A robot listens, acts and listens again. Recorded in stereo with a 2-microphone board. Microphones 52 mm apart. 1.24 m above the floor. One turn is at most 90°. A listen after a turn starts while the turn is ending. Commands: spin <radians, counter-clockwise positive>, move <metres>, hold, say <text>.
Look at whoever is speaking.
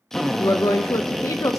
spin 1.57
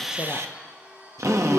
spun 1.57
hold
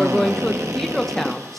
say Found it: a woman speaking, straight ahead, under 1 m away.